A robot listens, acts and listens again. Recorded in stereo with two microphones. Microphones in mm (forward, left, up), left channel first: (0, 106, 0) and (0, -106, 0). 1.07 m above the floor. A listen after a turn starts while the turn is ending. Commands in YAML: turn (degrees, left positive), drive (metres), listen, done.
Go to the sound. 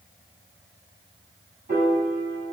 turn: -45
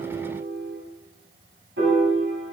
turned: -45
turn: -90
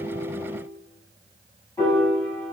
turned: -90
turn: 10
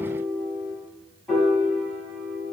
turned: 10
drive: 1.0
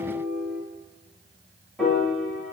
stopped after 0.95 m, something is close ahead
done: "I am next to the piano."